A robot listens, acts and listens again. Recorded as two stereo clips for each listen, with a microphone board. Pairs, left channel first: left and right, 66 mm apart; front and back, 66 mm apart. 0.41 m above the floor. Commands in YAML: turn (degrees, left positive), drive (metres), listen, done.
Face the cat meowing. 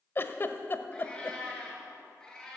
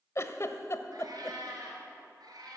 turn: 170
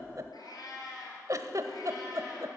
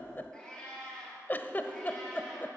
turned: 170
turn: 80
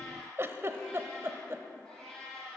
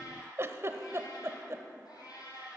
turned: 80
done: "Facing the cat meowing, over 4 m away."